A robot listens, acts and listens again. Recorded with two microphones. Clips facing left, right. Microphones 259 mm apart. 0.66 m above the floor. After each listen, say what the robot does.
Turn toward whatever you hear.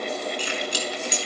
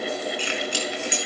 Turn 45° left.
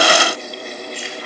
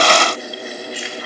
Keep listening.
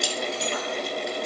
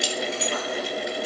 Facing the keys jangling, over 4 m away.